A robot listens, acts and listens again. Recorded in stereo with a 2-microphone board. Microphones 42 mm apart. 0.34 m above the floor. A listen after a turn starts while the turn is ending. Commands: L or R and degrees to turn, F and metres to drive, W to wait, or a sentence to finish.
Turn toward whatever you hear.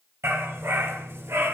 R90
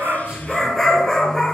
L15
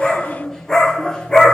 L20
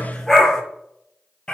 L20
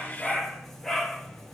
Facing the dog barking.